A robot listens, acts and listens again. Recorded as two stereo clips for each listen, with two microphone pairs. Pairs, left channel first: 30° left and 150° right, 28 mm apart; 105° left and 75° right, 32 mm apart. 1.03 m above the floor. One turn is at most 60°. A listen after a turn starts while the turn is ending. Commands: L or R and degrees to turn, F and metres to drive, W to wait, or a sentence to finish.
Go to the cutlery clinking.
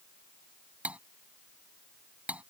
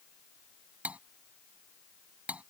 R60
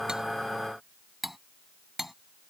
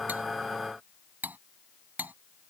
R60
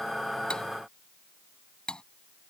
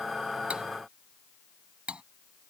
R25
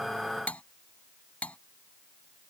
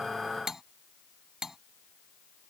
F1.0
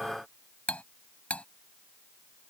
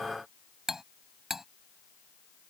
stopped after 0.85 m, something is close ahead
Something is in my way. I am facing the cutlery clinking but have not reached it.